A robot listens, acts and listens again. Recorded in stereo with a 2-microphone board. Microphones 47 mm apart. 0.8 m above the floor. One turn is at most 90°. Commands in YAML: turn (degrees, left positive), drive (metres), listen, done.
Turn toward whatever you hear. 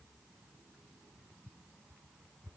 listen: true
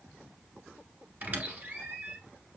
turn: -40
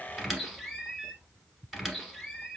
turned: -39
done: "Facing the squeak."